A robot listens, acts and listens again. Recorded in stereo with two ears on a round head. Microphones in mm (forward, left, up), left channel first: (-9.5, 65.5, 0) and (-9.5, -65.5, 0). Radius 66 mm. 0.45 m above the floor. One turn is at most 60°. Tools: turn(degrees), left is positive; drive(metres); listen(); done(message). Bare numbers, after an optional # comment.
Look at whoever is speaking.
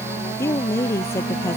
# The woman speaking: about 20° left or 160° left.
turn(20)
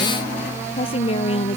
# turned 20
# So it is at 140° left.
turn(60)
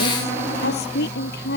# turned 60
# The woman speaking is now 75° left.
turn(60)
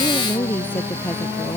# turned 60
# The woman speaking is now 15° left.
turn(15)
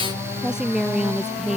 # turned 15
done("Found it: a woman speaking, straight ahead.")